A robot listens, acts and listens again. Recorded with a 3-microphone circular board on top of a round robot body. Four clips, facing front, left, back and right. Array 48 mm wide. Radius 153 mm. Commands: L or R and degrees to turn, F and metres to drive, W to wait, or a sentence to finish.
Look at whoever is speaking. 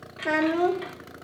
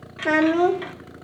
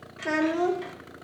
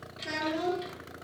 L80
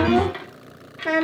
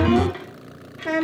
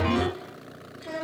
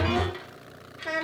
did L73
L10
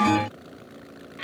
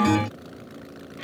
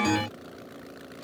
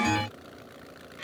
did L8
Found it: a child speaking, straight ahead.